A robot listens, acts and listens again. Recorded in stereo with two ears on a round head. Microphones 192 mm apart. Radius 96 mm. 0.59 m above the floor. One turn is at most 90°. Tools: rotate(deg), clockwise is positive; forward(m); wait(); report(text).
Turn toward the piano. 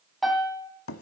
rotate(-30)
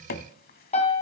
rotate(-90)
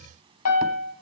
rotate(-75)
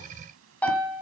report("Facing the piano.")